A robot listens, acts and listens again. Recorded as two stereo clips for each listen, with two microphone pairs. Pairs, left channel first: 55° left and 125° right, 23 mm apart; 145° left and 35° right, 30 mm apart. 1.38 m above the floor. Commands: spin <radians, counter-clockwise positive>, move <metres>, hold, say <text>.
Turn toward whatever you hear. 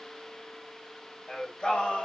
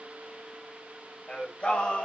spin 1.75
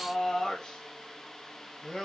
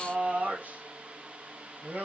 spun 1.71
spin -0.17
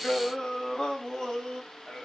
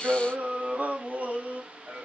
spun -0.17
say Facing the singing.